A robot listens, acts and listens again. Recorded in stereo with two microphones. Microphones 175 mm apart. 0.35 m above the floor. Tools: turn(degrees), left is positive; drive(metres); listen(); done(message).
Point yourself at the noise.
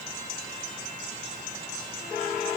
listen()
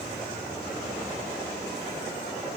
listen()
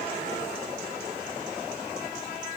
done("I can't make out anything.")